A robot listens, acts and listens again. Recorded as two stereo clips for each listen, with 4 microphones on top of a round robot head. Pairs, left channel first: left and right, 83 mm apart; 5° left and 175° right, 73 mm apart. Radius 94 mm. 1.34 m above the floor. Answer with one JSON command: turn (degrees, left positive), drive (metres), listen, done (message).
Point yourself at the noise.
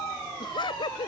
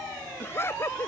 {"turn": 65}
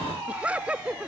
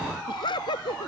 {"turn": -15}
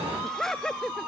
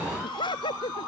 {"done": "Found it: laughter, straight ahead."}